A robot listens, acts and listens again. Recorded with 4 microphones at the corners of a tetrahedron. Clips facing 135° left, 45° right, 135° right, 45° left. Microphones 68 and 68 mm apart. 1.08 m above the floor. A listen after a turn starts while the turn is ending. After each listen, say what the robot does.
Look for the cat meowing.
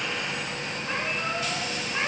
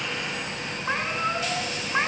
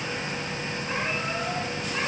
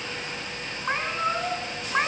Found it: a cat meowing, straight ahead.